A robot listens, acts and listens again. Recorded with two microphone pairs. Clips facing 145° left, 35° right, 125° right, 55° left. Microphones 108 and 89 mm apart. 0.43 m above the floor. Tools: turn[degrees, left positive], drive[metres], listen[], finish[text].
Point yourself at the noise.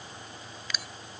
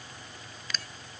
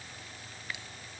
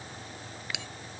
Thought: The bell: 65° left.
Action: turn[65]
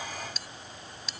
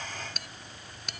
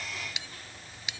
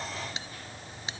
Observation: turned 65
Action: finish[Facing the bell.]